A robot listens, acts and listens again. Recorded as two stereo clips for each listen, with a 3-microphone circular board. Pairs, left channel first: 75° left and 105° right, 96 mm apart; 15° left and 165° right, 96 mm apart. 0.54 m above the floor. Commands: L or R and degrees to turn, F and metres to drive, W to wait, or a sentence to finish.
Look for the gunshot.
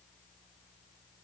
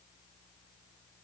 W
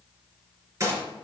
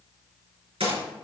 R160
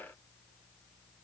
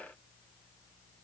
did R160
I heard a gunshot from this way, but can't make it out now.